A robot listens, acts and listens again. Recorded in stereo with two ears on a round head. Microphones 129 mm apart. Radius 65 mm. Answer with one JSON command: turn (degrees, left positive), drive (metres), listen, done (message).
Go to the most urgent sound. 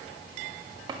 {"listen": true}
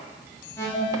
{"turn": 20}
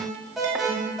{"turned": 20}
{"drive": 1.0}
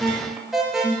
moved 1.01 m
{"drive": 1.0}
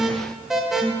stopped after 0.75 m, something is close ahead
{"done": "Arrived at the alarm, straight ahead."}